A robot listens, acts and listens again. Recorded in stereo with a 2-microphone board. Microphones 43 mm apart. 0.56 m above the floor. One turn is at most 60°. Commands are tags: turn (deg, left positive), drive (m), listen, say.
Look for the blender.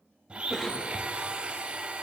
<turn deg="-25"/>
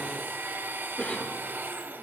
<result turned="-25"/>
<turn deg="-60"/>
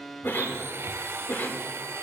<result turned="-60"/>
<turn deg="-60"/>
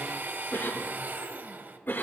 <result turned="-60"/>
<turn deg="-50"/>
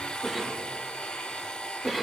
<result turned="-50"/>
<turn deg="20"/>
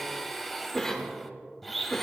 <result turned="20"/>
<say>Facing the blender.</say>